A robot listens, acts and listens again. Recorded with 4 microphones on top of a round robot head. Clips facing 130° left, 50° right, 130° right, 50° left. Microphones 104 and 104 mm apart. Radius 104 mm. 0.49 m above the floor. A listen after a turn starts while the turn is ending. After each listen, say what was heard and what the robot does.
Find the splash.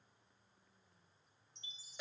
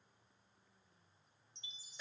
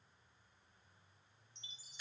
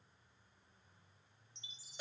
Keep listening.
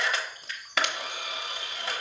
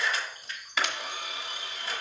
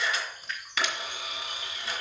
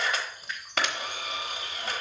The splash: 140° left. Turn 140° left.
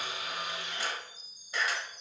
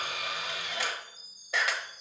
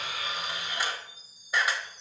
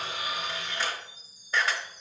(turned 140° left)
Facing where the splash came from. I can't hear it now.